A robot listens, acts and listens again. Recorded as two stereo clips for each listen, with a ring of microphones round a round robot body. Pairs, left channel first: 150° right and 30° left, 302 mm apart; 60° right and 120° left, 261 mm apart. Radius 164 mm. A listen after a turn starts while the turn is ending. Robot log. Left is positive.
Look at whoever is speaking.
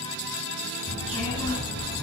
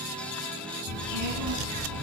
note: The child speaking: 130° left.
cmd yaw +130
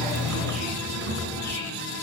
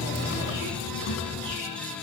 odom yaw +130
note: The child speaking is now 25° right.
cmd yaw -25
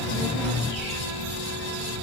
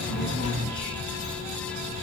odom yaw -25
end: Found it: a child speaking, straight ahead, 2 to 4 m away.